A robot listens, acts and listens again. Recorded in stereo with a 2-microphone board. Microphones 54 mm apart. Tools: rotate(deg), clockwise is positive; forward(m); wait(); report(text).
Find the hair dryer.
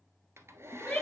rotate(55)
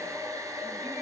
rotate(70)
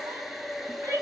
report("Facing the hair dryer.")